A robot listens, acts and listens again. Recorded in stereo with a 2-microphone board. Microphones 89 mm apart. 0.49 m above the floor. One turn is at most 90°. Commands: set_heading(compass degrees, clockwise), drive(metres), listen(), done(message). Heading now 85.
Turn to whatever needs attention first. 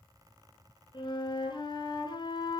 listen()
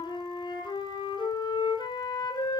listen()
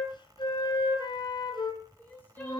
set_heading(65)
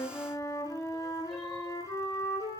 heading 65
listen()
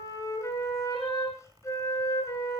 listen()
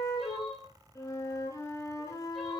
done("Facing the crying, over 4 m away.")